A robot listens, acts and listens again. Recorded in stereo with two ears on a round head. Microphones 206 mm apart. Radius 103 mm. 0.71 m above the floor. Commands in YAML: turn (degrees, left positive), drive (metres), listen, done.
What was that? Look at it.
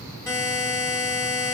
turn: 30
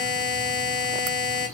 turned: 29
turn: 140
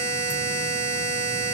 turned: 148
turn: -10
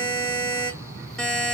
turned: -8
done: "Facing the buzzer, under 1 m away."